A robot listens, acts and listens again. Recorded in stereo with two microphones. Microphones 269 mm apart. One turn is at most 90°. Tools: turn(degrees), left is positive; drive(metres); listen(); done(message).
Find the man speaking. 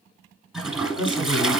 turn(degrees=-15)
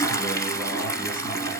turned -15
listen()
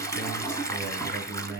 turn(degrees=-35)
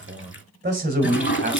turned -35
turn(degrees=-40)
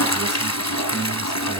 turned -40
listen()
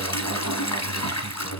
turn(degrees=-10)
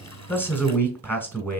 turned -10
done("Found it: a man speaking, straight ahead, 1 to 2 m away.")